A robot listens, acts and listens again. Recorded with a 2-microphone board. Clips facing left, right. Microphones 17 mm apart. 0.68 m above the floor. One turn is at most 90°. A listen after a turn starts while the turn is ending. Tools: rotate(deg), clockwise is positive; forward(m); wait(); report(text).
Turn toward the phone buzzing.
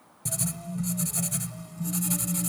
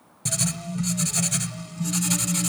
rotate(-20)
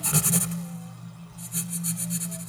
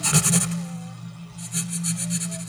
report("Facing the phone buzzing.")